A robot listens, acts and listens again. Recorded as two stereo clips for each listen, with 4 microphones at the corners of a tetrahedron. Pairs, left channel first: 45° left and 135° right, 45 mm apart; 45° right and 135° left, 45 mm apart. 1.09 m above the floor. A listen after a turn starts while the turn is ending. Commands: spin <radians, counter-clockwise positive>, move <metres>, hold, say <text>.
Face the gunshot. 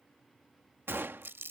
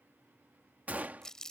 spin -2.97
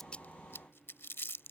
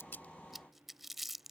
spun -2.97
say Facing where the gunshot came from. I can't hear it now.